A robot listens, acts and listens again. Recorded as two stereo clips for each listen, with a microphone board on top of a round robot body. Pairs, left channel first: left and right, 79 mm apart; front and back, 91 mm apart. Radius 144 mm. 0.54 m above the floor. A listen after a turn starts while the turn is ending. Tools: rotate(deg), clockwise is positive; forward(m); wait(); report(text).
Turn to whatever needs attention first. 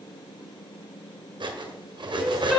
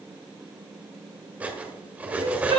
rotate(-180)
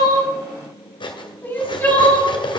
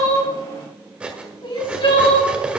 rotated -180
rotate(-25)
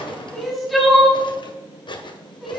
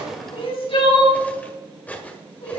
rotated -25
report("Found it: crying, straight ahead, 2 to 4 m away.")